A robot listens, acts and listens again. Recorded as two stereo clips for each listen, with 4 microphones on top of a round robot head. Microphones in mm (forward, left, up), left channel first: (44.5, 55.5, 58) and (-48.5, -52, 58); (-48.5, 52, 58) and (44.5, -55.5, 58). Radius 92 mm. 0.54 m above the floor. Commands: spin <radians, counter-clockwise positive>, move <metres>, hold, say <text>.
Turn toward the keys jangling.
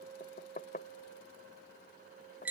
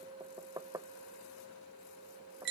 hold
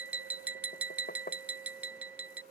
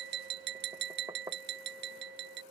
hold
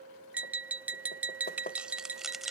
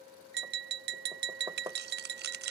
spin -0.70
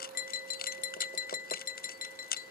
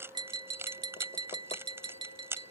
spin 0.44
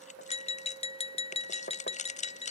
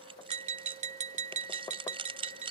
spin 0.17
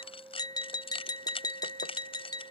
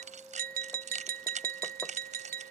say Found it: keys jangling, straight ahead.